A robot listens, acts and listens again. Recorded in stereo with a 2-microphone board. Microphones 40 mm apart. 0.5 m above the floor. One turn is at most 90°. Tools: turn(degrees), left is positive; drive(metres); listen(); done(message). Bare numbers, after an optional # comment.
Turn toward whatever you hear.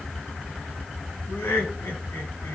# The laughter: about 75° left or 105° left.
turn(75)
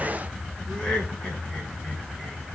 # So it is at 15° left.
turn(15)
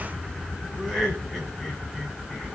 done("Found it: laughter, straight ahead, over 4 m away.")